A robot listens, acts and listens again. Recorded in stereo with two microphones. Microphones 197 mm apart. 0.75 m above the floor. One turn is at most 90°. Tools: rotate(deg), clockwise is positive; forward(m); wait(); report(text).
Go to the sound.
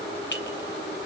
rotate(-70)
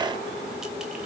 wait()
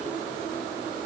wait()
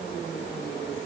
report("I heard a clink, but can't make it out now. It was about straight ahead or 40° left. I did not reach it.")